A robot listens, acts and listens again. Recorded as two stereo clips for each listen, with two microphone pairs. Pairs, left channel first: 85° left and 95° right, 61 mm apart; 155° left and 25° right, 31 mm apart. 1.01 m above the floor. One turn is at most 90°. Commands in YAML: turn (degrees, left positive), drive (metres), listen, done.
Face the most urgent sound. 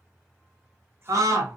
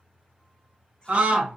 turn: -70
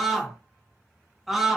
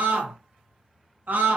turn: -10
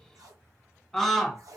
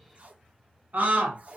done: "Found it: a scream, straight ahead, 1 to 2 m away."